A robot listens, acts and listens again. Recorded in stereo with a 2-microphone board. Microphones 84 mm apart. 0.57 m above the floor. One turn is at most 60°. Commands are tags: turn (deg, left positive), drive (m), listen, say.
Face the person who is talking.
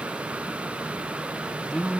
<turn deg="30"/>
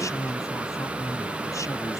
<turn deg="60"/>
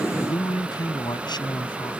<turn deg="60"/>
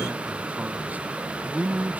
<turn deg="-20"/>
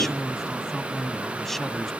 <say>Found it: a man speaking, straight ahead.</say>